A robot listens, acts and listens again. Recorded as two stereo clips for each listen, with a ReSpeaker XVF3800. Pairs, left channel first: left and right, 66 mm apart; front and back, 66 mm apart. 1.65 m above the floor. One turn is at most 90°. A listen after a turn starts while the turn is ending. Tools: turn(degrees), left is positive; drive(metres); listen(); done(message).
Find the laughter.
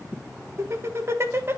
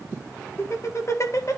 turn(degrees=-40)
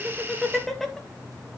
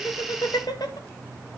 done("Found it: laughter, straight ahead.")